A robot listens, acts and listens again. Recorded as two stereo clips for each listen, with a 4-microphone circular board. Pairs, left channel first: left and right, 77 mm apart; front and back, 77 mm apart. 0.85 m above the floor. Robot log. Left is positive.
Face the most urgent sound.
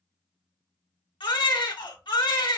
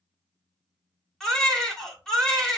note: The baby crying: 85° left.
cmd yaw +85
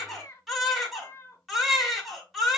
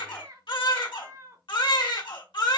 end: Facing the baby crying.